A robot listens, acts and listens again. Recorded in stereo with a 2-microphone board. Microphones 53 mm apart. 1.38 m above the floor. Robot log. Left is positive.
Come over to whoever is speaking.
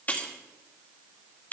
cmd idle
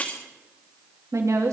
cmd yaw -90
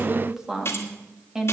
note: So it is at 10° right.
cmd yaw -10
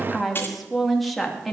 cmd fwd 1.0
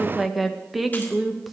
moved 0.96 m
cmd fwd 1.0
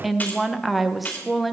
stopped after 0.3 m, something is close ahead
end: Arrived at the woman speaking, straight ahead.